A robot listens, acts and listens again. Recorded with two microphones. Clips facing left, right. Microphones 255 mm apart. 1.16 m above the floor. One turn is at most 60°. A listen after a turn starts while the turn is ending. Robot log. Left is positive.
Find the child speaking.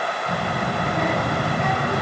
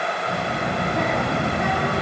note: The child speaking: about 35° left or 145° left.
cmd yaw +35
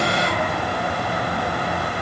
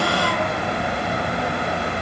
note: So it is at 10° right.
cmd yaw -10
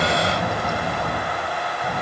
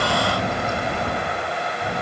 note: The child speaking is now 15° right.
cmd yaw -15
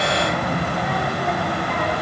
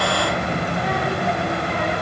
end: Facing the child speaking, over 4 m away.